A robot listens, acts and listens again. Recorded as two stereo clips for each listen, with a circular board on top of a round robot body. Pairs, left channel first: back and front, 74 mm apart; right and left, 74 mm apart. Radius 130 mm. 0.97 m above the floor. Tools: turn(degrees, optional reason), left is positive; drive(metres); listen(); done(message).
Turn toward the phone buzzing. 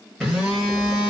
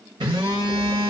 turn(degrees=90, reason="The phone buzzing: 90° left.")
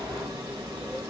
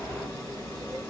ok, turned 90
turn(degrees=-30, reason="The phone buzzing is now 30° right.")
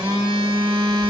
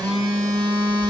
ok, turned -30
done("Found it: a phone buzzing, straight ahead, 1 to 2 m away.")